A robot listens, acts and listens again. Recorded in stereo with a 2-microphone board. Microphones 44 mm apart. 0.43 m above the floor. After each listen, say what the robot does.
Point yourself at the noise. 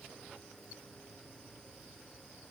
Keep listening.
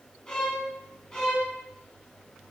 Turn 20° left.
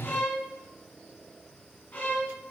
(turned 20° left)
Turn 140° left.
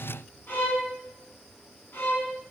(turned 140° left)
Turn 55° left.
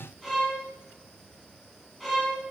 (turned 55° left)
Facing the violin.